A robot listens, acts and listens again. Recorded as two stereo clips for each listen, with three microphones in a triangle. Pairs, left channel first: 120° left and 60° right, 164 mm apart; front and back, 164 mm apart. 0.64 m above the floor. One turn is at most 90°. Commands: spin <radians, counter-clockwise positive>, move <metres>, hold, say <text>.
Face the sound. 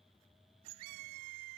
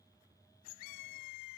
hold
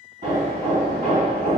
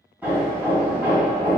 spin -1.57
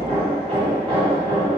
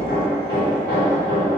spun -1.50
spin -0.17
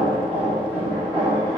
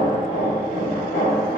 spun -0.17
say Facing the hammering, 1 to 2 m away.